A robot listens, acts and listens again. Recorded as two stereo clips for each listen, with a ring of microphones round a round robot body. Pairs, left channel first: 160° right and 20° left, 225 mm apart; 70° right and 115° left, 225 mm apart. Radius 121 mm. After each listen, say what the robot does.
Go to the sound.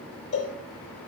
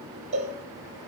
Turn 175° left.
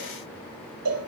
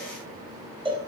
Turn 45° left.
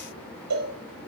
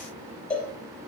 Turn 20° left.
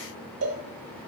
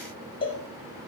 Drive 1.0 m forward.
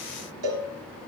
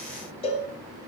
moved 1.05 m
Drive 1.0 m forward.
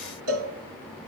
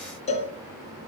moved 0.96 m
Drive 1.0 m forward.
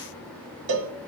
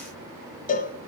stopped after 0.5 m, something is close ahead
Turn 10° right.
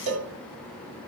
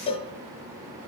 Arrived at the cowbell, straight ahead.